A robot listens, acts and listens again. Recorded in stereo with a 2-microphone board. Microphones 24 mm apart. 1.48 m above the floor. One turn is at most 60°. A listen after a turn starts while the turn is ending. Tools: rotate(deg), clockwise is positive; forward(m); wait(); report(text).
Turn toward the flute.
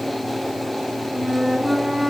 rotate(30)
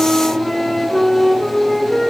rotate(-25)
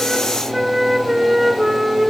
rotate(10)
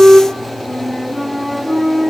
report("Facing the flute, over 4 m away.")